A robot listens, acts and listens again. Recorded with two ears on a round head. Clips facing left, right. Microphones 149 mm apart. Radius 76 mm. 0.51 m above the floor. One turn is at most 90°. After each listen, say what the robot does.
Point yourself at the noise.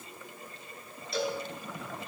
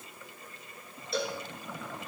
Turn 90° right.
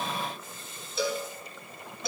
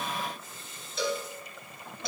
Facing the cowbell.